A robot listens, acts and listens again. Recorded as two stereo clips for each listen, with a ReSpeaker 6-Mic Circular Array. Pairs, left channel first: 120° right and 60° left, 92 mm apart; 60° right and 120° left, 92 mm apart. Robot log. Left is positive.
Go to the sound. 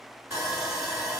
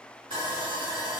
note: The sawing: 120° left.
cmd yaw +120
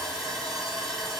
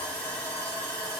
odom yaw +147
note: The sawing is now 30° right.
cmd yaw -30
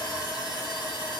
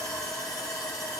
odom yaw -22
note: The sawing is now 10° right.
cmd yaw -10
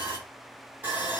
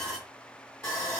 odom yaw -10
cmd fwd 1.0
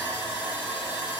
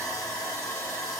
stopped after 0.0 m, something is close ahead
end: Blocked. The sawing is further on, straight ahead.